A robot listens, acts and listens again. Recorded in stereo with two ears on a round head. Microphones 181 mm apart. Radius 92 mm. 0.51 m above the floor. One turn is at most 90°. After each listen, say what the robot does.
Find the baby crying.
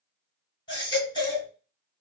Turn 25° left.
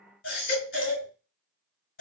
Turn 90° left.
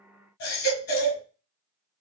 Turn 45° left.
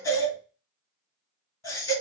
Turn 15° left.
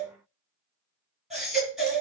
Facing the baby crying, 2 to 4 m away.